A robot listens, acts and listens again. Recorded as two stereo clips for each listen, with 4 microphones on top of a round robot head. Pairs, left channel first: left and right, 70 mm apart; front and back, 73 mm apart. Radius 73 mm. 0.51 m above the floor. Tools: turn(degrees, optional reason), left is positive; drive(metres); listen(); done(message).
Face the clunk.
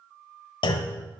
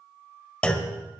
turn(degrees=75, reason="The clunk: 75° left.")
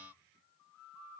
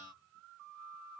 done("Facing where the clunk came from. I can't hear it now.")